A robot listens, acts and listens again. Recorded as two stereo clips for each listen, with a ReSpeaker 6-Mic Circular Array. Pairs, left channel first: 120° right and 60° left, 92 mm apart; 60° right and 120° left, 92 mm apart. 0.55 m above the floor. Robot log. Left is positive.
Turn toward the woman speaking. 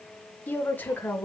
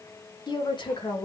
note: The woman speaking: 45° right.
cmd yaw -45
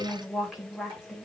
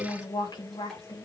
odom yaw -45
note: The woman speaking is now 25° right.
cmd yaw -25
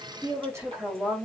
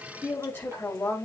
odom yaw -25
end: Facing the woman speaking.